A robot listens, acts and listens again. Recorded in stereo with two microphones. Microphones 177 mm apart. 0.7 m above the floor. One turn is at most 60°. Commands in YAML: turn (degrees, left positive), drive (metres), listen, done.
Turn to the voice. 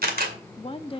turn: 30
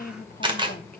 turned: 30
turn: 60
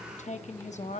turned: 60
turn: 50
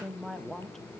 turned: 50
done: "Facing the woman speaking, under 1 m away."